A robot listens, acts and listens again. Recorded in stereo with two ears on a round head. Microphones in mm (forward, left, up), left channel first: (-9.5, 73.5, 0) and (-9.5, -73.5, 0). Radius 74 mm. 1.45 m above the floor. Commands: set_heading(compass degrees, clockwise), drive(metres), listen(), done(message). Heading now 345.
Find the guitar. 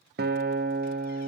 set_heading(45)
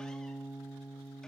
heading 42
done("Facing the guitar.")